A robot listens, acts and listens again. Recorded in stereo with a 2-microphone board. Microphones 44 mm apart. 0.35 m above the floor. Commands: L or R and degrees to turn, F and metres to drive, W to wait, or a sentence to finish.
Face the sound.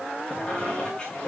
L20
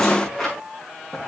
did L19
Facing the squeak, over 4 m away.